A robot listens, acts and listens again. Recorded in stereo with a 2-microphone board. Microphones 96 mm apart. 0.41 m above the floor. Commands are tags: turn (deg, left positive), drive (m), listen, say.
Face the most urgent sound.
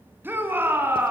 <turn deg="-20"/>
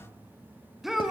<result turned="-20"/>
<say>Found it: a shout, straight ahead, over 4 m away.</say>